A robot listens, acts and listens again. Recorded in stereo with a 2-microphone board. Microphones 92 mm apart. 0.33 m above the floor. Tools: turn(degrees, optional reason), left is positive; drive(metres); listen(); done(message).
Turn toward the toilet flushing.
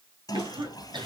turn(degrees=45, reason="The toilet flushing: about 45° left or 135° left.")
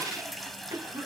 done("Facing the toilet flushing, 1 to 2 m away.")